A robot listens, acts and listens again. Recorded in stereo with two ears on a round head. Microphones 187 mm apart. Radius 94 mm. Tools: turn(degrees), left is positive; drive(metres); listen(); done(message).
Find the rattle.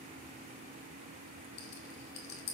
turn(degrees=60)
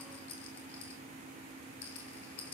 turn(degrees=60)
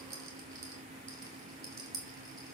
turn(degrees=-15)
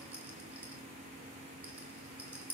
done("Found it: a rattle, straight ahead.")